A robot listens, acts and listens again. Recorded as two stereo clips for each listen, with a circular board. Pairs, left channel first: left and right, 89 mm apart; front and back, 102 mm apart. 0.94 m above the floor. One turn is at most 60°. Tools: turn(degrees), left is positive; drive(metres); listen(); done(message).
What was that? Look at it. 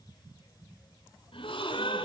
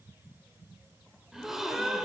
turn(degrees=60)
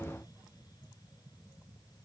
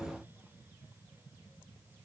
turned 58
turn(degrees=35)
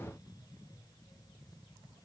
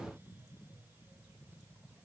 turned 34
done("I heard a gasp from this way, but can't make it out now.")